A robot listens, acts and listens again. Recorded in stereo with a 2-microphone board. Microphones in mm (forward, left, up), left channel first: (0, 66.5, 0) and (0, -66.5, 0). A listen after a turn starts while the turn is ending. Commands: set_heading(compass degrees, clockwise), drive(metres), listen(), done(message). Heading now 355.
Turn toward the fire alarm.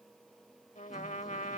listen()
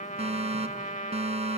set_heading(45)
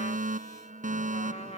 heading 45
set_heading(120)
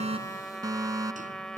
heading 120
set_heading(145)
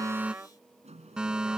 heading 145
done("Found it: a fire alarm, straight ahead.")